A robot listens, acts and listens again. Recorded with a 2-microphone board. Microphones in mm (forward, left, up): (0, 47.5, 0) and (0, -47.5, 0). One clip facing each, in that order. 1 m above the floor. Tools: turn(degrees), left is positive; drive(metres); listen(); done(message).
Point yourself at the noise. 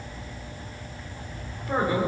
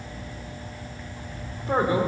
turn(degrees=-25)
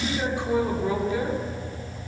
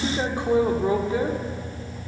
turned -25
turn(degrees=-30)
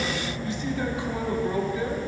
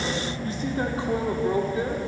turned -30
turn(degrees=-25)
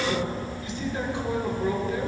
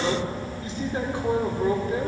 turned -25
turn(degrees=-40)
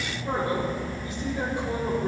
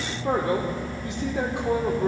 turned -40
turn(degrees=-100)
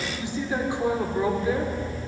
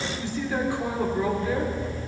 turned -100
turn(degrees=20)
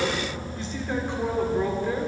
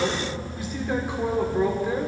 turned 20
turn(degrees=-10)
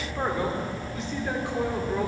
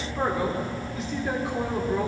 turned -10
done("Facing the man speaking.")